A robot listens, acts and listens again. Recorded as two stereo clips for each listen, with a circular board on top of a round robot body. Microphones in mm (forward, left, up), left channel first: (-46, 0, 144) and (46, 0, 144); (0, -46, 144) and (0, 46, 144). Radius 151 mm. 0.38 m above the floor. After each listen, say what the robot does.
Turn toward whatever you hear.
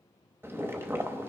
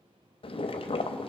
Turn 65° right.
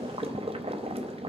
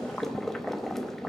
Facing the boiling, under 1 m away.